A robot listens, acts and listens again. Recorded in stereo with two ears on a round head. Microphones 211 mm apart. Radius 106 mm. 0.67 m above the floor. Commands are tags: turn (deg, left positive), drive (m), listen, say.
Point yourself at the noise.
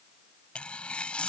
<turn deg="30"/>
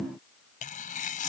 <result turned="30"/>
<turn deg="145"/>
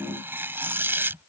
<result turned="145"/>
<turn deg="-10"/>
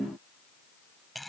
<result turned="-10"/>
<say>Found it: tearing paper, straight ahead.</say>